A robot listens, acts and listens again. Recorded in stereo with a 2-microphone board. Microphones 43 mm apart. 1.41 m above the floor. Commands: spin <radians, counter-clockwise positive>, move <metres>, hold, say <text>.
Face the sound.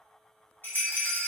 spin 0.87
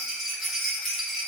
say Found it: a rattle, straight ahead.